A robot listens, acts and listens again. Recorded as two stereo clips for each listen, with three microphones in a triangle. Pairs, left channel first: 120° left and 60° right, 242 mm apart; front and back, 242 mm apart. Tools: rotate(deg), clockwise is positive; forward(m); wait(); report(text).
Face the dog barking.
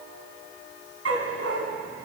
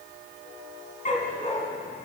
rotate(60)
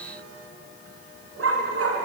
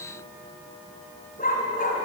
rotate(55)
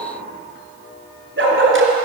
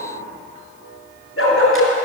rotate(30)
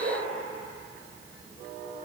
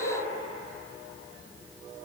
rotate(10)
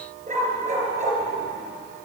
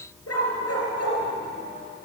report("Facing the dog barking, 2 to 4 m away.")